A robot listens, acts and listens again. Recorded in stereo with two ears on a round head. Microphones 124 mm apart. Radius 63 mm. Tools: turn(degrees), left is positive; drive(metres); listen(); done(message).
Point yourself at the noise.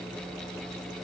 listen()
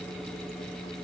listen()
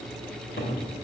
turn(degrees=70)
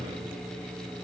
listen()
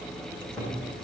done("Facing the cupboard door, over 4 m away.")